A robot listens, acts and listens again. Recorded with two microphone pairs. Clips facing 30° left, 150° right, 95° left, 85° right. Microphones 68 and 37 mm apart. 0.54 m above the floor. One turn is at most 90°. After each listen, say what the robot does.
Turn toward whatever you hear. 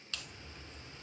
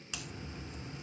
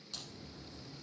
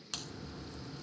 Turn 80° right.
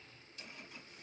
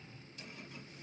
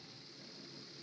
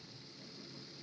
Facing where the crack came from. I can't hear it now.